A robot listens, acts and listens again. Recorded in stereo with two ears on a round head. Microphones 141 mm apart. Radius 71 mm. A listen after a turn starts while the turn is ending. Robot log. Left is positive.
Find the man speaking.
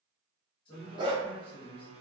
note: The man speaking: about 30° left or 150° left.
cmd yaw +30
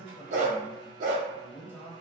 note: So it is at 15° left.
cmd yaw +15
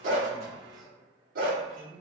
end: Facing the man speaking.